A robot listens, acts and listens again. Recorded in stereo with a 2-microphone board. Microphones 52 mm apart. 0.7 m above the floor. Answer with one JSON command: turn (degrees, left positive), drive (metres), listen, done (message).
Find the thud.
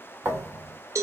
{"turn": -50}
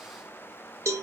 {"listen": true}
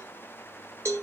{"done": "I heard a thud, but can't make it out now. It was about straight ahead or 80° right."}